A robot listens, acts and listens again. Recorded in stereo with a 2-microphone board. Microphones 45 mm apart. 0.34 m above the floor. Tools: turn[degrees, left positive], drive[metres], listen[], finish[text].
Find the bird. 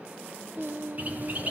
Thought: The bird: about 35° right or 145° right.
Action: turn[-35]
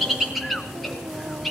Action: finish[Facing the bird.]